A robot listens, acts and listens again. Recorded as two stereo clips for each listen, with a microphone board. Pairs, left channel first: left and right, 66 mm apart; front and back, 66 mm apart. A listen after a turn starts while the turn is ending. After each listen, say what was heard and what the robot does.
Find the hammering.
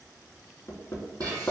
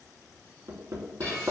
The hammering: 130° left. Turn 130° left.
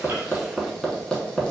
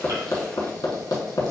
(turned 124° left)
Found it: hammering, straight ahead.